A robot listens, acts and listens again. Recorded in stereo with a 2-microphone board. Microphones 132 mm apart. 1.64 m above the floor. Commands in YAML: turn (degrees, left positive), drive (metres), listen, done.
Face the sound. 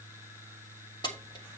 turn: 35
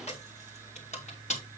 turn: 110
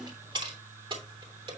turn: -45
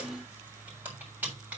turn: -15
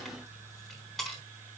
done: "Facing the keys jangling."